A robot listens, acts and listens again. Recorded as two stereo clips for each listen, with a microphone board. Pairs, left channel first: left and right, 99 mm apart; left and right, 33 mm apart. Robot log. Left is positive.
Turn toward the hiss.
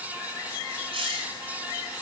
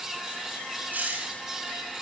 note: The hiss: about 55° right or 125° right.
cmd yaw -55
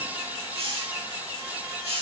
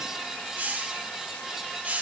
note: So it is at 70° right.
cmd yaw -70
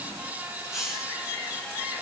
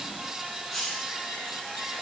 end: Facing the hiss.